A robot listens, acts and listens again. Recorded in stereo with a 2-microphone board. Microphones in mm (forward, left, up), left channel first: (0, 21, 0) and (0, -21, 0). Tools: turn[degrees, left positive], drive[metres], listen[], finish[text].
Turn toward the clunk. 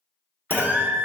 Thought: The clunk: about 60° left or 120° left.
Action: turn[60]
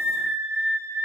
Action: listen[]
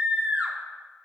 Action: finish[I heard a clunk, but can't make it out now. It was about straight ahead or 60° left.]